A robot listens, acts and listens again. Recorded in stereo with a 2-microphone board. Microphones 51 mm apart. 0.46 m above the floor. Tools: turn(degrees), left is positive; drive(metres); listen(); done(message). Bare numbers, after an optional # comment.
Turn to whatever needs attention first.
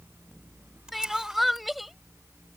turn(30)
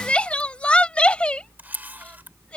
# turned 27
# So it is at 155° left.
turn(155)
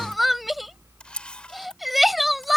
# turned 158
done("Facing the crying.")